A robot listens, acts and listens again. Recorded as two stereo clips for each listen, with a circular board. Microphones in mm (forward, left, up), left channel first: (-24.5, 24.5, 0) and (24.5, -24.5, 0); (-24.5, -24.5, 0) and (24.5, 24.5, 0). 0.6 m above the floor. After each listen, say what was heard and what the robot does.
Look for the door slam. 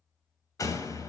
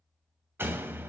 The door slam: 100° left. Turn 100° left.
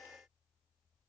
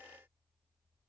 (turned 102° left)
I heard a door slam from this way, but can't make it out now.